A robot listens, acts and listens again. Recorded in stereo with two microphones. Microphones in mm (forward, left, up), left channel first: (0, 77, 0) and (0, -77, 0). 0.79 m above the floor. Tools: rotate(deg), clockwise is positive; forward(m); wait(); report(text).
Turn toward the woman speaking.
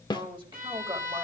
rotate(35)
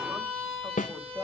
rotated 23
rotate(20)
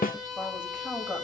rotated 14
rotate(10)
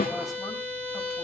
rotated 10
wait()
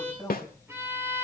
report("Facing the woman speaking, over 4 m away.")